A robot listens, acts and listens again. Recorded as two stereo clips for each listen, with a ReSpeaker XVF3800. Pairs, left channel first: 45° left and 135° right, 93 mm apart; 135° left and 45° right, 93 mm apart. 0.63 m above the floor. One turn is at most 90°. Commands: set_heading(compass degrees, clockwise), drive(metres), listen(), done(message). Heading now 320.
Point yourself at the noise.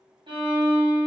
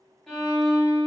set_heading(50)
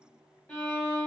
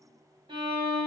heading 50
set_heading(70)
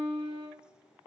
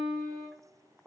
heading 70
set_heading(80)
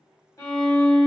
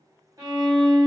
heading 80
done("Found it: a violin, straight ahead, 1 to 2 m away.")